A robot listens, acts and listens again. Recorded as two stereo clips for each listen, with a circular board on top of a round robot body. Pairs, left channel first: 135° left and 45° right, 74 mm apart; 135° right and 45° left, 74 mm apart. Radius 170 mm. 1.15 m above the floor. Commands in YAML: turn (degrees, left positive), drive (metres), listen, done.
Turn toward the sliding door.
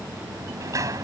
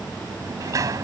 done: "Found it: a sliding door, straight ahead."